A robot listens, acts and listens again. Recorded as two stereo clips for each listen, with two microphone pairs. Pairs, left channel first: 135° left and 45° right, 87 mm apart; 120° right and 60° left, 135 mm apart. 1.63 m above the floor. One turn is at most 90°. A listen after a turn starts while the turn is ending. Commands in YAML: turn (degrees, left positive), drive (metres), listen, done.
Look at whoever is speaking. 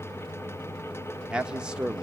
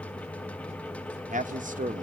turn: 35
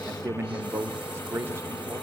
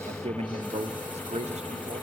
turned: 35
turn: 15
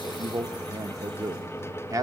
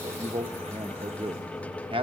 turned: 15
done: "Found it: a man speaking, straight ahead, under 1 m away."